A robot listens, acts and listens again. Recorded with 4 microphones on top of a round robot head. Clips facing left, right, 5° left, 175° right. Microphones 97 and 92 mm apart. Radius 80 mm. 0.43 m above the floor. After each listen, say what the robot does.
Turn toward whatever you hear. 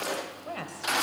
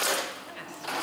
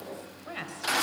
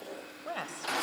Turn 135° left.
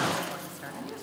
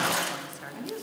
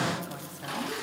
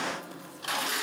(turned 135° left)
Keep listening.
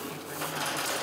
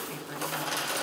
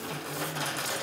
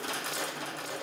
Keep listening.
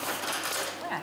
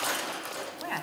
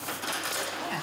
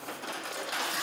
Facing where the woman speaking came from. I can't hear it now.